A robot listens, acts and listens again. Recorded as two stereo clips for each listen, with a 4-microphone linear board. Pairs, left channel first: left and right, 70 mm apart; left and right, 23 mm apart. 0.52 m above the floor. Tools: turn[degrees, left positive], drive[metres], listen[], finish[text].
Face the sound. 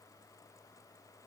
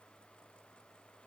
Action: listen[]
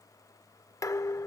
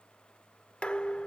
Thought: The dishes clattering: about 50° left or 130° left.
Action: turn[50]
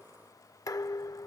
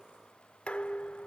Thought: So it is at 75° left.
Action: turn[75]
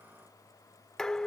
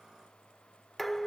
Thought: The dishes clattering is now 10° left.
Action: turn[10]
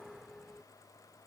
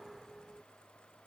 Action: finish[Facing the dishes clattering.]